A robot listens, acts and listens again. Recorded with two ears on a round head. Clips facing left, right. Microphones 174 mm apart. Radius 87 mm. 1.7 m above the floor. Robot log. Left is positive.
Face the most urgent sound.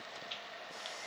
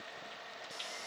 cmd idle
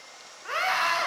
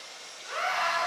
note: The scream: about 70° left or 110° left.
cmd yaw +70
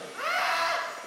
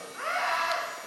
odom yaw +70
note: So it is at 40° left.
cmd yaw +40
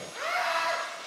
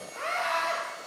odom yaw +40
end: Facing the scream, 1 to 2 m away.